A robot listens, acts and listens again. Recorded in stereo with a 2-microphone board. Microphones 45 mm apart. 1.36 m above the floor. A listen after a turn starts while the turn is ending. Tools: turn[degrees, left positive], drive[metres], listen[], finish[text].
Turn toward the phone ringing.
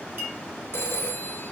Thought: The phone ringing: about 70° left or 110° left.
Action: turn[70]
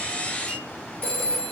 Thought: So it is at 35° left.
Action: turn[35]
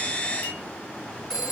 Thought: The phone ringing is now 10° left.
Action: turn[10]
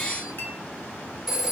Action: finish[Facing the phone ringing.]